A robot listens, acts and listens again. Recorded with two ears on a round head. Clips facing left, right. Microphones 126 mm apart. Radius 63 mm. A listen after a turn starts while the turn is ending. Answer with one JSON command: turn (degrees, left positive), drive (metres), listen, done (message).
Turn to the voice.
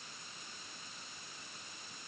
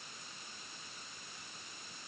{"listen": true}
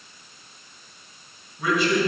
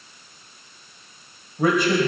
{"turn": -40}
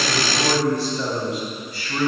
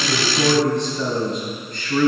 {"turn": 10}
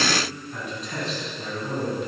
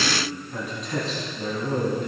{"done": "Found it: a man speaking, straight ahead."}